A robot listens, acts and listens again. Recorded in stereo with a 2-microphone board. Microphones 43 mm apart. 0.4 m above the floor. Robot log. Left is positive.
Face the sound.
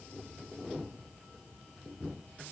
cmd idle
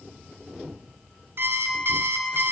note: The alarm clock: about 60° right or 120° right.
cmd yaw -60
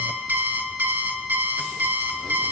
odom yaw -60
note: So it is at 55° right.
cmd yaw -55
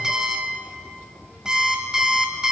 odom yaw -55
note: The alarm clock is now 15° right.
cmd yaw -15
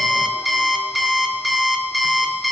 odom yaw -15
end: Found it: an alarm clock, straight ahead, 1 to 2 m away.